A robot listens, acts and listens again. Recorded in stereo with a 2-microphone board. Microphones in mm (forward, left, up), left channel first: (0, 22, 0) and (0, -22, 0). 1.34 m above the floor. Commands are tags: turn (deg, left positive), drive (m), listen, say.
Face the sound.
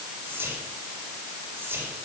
<turn deg="-65"/>
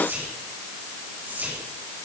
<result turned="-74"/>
<turn deg="-40"/>
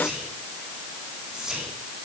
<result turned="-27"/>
<turn deg="-15"/>
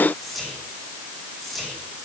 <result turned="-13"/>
<say>Found it: whispering, straight ahead.</say>